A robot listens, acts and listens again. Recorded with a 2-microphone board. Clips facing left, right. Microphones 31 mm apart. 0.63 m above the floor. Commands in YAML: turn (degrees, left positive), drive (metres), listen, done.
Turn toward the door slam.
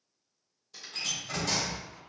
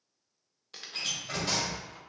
turn: -30
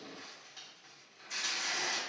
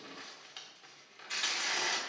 listen: true
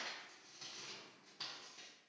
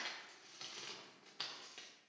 done: "I heard a door slam, but can't make it out now. It was about straight ahead or 120° right."